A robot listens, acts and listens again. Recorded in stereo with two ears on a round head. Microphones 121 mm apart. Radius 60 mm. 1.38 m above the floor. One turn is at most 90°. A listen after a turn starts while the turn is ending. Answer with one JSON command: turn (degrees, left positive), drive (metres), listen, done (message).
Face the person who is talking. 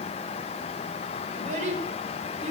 {"turn": -55}
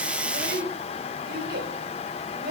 {"turn": -70}
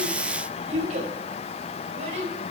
{"turn": -45}
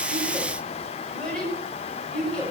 {"done": "Found it: a child speaking, straight ahead."}